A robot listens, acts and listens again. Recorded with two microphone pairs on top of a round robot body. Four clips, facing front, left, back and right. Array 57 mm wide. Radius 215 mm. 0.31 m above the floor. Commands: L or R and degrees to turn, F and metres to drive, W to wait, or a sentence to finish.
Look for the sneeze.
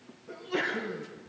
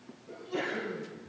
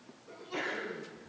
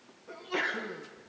R90
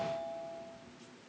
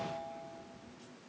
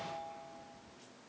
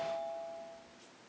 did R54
R35
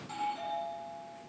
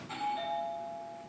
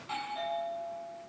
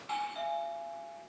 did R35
I heard a sneeze from this way, but can't make it out now.